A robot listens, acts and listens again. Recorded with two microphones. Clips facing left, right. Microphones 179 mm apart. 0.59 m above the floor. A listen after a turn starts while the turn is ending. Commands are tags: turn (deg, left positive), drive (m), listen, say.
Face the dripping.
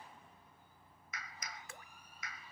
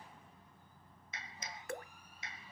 <turn deg="-55"/>
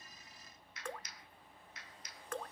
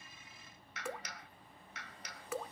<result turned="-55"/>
<turn deg="-10"/>
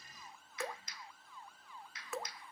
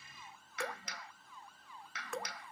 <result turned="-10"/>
<say>Found it: dripping, straight ahead.</say>